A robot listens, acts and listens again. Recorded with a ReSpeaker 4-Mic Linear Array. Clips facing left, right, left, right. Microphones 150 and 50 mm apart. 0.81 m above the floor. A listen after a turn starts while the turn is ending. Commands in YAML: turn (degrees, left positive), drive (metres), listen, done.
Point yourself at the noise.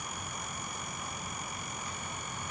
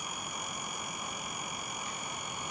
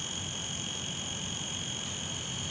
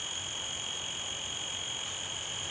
turn: -20
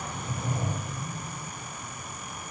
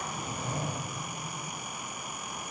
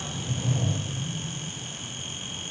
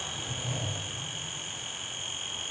done: "Found it: a sliding door, straight ahead, 1 to 2 m away."